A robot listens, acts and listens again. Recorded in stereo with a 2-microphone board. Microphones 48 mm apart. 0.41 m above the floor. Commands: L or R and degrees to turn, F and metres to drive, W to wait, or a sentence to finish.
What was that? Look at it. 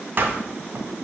R45
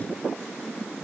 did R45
W
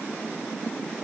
I heard a door slam, but can't make it out now. It was about straight ahead or 90° right.